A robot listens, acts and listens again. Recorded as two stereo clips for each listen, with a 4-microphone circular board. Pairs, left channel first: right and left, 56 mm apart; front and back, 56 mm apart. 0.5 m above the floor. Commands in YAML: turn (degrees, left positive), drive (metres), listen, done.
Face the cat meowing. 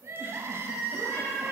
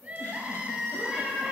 turn: -90
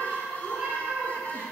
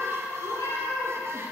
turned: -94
turn: 20
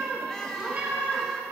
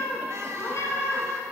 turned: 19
turn: 30
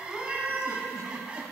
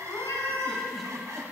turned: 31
turn: 20
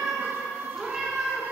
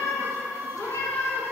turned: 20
turn: 10
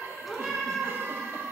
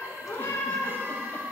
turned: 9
done: "Facing the cat meowing, 1 to 2 m away."